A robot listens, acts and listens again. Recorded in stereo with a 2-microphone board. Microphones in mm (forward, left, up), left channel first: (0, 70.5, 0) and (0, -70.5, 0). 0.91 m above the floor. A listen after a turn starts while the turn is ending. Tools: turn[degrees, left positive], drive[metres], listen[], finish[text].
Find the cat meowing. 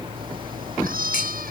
Action: turn[-90]
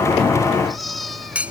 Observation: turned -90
Action: finish[Found it: a cat meowing, straight ahead.]